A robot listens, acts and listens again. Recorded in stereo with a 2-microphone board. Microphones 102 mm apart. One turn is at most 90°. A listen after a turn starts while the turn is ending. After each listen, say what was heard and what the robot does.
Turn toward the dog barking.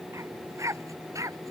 The dog barking: about 30° right or 150° right. Turn 30° right.
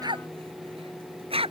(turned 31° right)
So it is at 110° right. Turn 90° right.
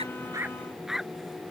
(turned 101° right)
Facing the dog barking.